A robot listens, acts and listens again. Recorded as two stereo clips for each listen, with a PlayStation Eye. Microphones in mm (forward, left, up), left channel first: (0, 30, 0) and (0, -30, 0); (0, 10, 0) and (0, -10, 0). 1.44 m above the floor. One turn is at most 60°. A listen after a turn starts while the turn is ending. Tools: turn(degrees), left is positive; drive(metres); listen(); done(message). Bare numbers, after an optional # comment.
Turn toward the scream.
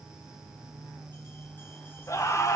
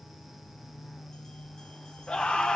# The scream: about 60° left or 120° left.
turn(60)
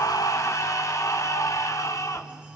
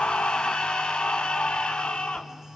# So it is at 60° left.
turn(60)
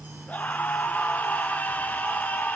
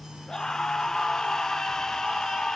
# The scream is now 25° left.
turn(25)
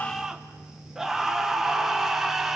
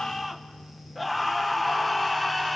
# The scream is now 10° right.
turn(-10)
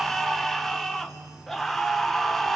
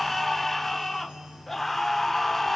done("Found it: a scream, straight ahead.")